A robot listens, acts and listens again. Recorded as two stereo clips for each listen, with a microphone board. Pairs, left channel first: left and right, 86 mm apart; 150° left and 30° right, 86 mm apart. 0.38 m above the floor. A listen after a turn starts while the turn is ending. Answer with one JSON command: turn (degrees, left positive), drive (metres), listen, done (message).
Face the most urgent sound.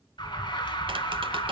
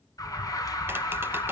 {"turn": 105}
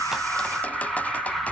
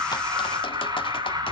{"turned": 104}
{"done": "Facing the alarm."}